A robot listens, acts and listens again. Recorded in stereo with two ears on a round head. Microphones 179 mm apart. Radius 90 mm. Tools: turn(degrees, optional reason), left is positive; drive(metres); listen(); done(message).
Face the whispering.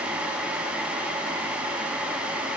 listen()
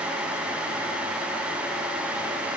listen()
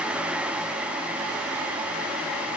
done("I can't make out whispering to turn to.")